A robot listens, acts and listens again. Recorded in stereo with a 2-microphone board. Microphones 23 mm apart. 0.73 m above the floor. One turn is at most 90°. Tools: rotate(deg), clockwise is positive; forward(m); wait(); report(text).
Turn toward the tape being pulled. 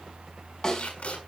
rotate(-90)
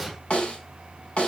wait()
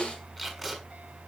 report("Found it: tape being pulled, straight ahead, over 4 m away.")